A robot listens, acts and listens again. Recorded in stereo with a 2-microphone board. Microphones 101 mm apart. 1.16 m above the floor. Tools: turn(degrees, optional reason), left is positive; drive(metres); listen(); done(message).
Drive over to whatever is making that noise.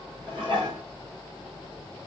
turn(degrees=-45, reason="The dishes clattering: about 45° right or 135° right.")
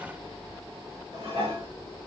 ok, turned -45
turn(degrees=-90, reason="So it is at 90° right.")
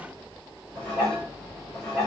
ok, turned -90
turn(degrees=10, reason="The dishes clattering is now 10° left.")
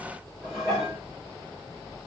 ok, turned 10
drive(metres=1.0)
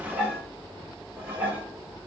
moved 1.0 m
turn(degrees=-15, reason="The dishes clattering is now 15° right.")
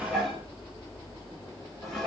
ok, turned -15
drive(metres=1.0)
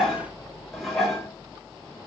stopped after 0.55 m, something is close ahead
done("Arrived at the dishes clattering, straight ahead.")